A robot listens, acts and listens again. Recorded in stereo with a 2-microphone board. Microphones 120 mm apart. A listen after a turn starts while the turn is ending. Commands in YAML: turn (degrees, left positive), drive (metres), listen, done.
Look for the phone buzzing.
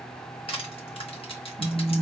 turn: -55
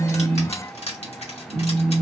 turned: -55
turn: -65
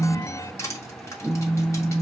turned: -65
turn: -25
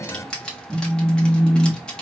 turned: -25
turn: -10
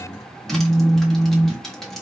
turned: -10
done: "Facing the phone buzzing, under 1 m away."